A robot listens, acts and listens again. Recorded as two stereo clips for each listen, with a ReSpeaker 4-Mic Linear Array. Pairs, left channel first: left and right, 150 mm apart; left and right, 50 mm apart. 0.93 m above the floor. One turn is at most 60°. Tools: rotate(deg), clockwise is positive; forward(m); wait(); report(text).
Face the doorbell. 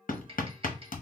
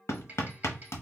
wait()
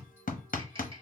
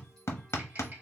wait()
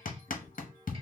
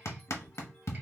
report("I can't make out a doorbell to turn to.")